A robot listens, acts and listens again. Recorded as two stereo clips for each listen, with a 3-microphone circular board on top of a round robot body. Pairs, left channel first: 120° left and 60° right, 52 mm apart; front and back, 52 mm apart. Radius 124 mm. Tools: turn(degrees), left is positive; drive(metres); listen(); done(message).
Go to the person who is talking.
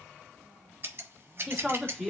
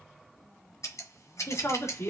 turn(degrees=25)
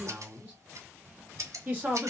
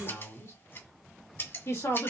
drive(metres=1.0)
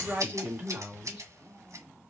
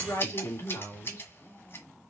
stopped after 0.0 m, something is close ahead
done("Blocked. The woman speaking is further on, straight ahead.")